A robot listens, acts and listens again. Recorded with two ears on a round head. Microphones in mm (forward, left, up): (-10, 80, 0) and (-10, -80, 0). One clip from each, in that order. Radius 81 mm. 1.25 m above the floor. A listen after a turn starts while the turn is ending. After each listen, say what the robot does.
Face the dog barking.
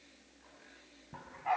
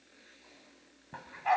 Turn 60° right.
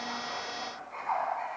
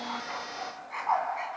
Turn 55° right.
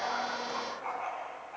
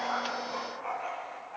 Found it: a dog barking, straight ahead.